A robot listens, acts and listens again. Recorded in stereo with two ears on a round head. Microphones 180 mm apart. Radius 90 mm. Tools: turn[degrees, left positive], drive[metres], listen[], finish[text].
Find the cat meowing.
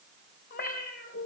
Thought: The cat meowing: about 50° left or 130° left.
Action: turn[50]
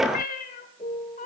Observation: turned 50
Thought: So it is at 45° left.
Action: turn[45]
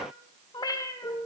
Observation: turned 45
Thought: The cat meowing is now 15° left.
Action: turn[15]
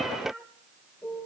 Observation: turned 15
Action: finish[Facing the cat meowing, 1 to 2 m away.]